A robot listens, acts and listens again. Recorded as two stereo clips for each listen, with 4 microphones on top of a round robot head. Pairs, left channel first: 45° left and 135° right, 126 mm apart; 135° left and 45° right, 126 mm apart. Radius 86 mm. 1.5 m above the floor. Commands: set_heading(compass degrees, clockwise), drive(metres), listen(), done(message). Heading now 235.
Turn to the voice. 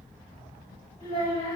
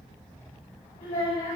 set_heading(130)
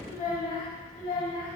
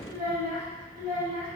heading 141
set_heading(116)
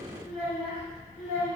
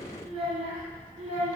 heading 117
done("Facing the child speaking.")